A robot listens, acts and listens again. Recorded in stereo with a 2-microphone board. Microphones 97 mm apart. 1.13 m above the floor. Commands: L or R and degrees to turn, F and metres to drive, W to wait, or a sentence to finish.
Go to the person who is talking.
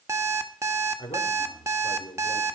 L65
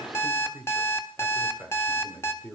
F1.0
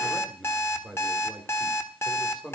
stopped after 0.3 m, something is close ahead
Something is in my way. I am facing the man speaking but have not reached it.